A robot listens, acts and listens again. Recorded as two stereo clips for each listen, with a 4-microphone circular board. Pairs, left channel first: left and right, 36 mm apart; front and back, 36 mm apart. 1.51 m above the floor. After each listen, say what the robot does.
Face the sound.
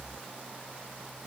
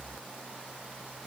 Keep listening.
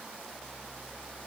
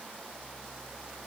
Keep listening.
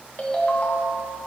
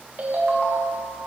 Turn 140° left.
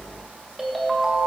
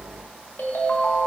Found it: a ringtone, straight ahead.